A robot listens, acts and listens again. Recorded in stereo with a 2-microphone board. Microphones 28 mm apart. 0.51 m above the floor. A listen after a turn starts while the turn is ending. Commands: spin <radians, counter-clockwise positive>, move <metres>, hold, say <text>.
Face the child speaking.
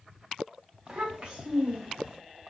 spin -0.96
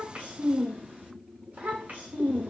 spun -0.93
spin -1.22
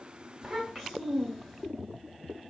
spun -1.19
say Found it: a child speaking, straight ahead.